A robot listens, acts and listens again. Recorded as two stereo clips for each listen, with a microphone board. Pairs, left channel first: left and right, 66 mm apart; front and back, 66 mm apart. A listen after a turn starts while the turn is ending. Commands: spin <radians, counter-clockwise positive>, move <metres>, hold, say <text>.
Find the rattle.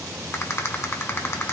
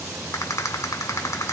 spin 0.70
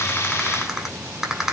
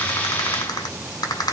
say Facing the rattle.